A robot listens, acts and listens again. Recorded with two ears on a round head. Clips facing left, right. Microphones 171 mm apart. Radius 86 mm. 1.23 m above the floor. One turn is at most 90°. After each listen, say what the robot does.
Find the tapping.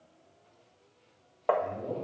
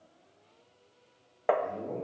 Turn 20° right.
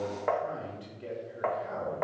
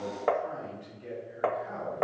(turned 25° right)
Turn 90° right.
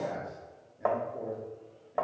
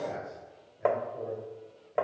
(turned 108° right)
Turn 30° right.
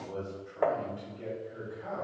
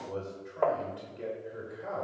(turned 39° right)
Turn 10° left.
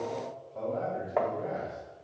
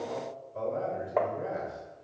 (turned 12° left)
Facing the tapping.